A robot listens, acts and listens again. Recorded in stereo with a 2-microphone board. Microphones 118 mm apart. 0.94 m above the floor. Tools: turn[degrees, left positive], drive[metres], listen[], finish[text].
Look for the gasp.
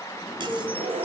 Action: turn[-90]
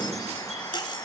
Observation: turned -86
Action: finish[Facing where the gasp came from. I can't hear it now.]